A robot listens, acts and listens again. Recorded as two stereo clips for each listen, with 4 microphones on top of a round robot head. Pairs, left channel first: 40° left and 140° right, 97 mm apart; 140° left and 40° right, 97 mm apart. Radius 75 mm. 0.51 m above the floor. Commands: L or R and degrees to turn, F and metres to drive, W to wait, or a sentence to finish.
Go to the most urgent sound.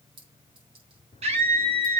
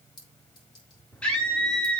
R140
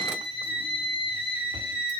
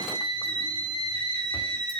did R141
F1.0
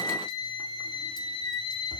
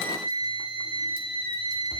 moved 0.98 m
F1.0
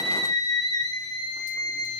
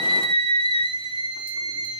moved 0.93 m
R10
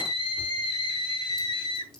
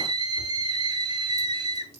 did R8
F1.0
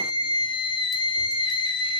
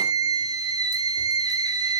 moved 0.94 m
F1.0
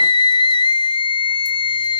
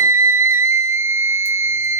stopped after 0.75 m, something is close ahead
L20
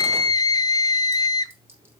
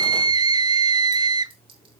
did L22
I am next to the scream.